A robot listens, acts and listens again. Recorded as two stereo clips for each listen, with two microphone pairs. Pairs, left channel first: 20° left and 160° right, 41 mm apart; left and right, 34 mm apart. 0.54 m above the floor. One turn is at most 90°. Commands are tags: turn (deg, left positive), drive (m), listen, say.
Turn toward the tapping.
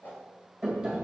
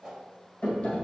<turn deg="90"/>
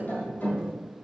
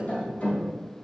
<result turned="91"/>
<turn deg="35"/>
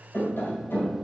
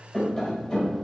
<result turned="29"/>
<turn deg="10"/>
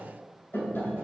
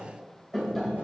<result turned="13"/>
<say>Facing the tapping, 1 to 2 m away.</say>